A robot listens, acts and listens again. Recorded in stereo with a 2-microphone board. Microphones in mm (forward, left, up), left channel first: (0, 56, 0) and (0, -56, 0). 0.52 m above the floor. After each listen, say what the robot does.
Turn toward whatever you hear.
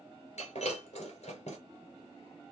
Turn 90° left.
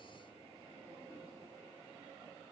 Facing where the breaking glass came from. I can't hear it now.